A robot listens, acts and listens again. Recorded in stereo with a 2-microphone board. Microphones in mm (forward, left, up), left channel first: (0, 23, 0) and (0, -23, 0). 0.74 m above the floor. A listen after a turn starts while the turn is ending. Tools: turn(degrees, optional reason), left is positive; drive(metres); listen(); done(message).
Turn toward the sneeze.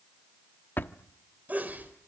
turn(degrees=-35, reason="The sneeze: about 35° right or 145° right.")
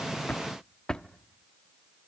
listen()
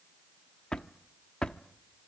done("I heard a sneeze, but can't make it out now. It was about straight ahead or 110° right.")